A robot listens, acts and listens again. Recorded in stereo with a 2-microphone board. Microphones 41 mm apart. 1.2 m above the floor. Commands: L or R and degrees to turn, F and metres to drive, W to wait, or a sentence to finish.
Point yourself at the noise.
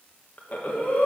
L40
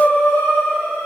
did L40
L100
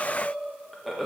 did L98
Found it: breathing, straight ahead.